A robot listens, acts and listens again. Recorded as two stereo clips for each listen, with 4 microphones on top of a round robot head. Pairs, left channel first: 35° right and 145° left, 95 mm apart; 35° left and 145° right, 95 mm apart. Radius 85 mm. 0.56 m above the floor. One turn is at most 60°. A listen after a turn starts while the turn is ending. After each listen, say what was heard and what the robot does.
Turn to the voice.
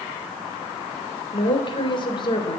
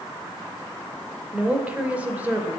The woman speaking: 75° right. Turn 60° right.
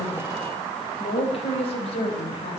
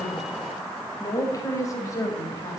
The woman speaking is now 25° right. Turn 25° right.
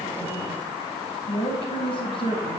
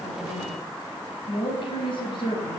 Found it: a woman speaking, straight ahead, over 4 m away.